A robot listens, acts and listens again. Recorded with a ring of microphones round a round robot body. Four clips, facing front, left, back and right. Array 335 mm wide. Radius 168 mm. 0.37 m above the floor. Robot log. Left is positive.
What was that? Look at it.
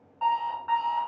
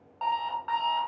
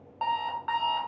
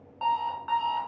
note: The alarm clock: 175° right.
cmd yaw -175
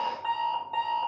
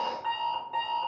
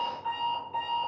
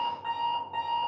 note: The alarm clock is now 25° left.
cmd yaw +25
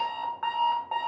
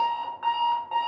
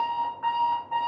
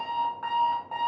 note: The alarm clock is now 10° left.
cmd yaw +10
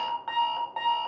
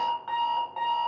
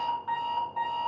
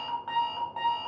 end: Found it: an alarm clock, straight ahead.